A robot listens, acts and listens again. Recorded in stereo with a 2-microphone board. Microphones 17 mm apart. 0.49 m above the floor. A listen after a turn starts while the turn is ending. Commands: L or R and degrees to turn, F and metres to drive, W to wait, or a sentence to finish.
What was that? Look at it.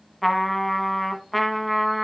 L30
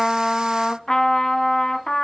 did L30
L140
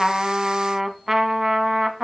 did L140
R25
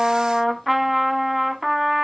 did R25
R10
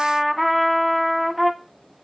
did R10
Facing the trumpet.